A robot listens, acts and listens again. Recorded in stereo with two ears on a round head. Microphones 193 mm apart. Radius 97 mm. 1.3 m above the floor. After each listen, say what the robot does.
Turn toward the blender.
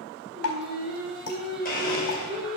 Turn 45° left.
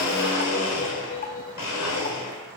Turn 90° left.
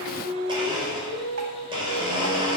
Turn 25° right.
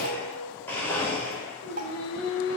Turn 10° left.
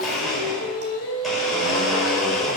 Found it: a blender, straight ahead.